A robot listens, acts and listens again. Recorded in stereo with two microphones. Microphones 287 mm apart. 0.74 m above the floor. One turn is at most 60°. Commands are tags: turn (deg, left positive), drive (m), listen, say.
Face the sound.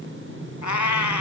<turn deg="60"/>
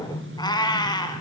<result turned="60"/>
<turn deg="15"/>
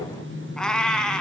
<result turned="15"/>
<say>Facing the cat meowing.</say>